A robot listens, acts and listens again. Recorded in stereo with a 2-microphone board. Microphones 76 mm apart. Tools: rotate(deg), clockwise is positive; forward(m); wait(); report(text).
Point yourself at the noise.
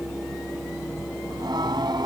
rotate(70)
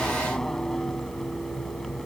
report("Found it: singing, straight ahead.")